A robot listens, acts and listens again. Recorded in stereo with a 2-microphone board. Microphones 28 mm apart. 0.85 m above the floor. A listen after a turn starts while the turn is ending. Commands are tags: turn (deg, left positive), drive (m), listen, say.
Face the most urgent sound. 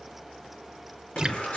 <turn deg="55"/>
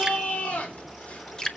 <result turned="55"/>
<turn deg="65"/>
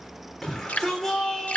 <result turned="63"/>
<say>Found it: a shout, straight ahead, 2 to 4 m away.</say>